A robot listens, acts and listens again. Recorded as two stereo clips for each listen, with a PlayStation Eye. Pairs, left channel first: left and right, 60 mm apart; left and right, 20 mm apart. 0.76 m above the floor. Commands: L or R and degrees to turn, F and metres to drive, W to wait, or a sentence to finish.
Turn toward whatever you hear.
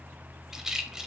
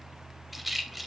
R30
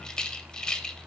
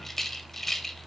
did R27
L15
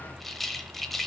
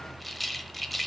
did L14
Found it: a rattle, straight ahead, under 1 m away.